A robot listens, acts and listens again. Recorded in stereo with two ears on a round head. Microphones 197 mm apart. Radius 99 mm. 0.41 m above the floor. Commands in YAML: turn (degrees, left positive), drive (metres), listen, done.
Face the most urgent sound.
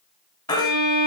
turn: 20
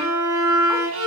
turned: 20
listen: true
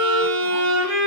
listen: true
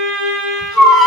done: "Found it: a baby crying, straight ahead, 2 to 4 m away."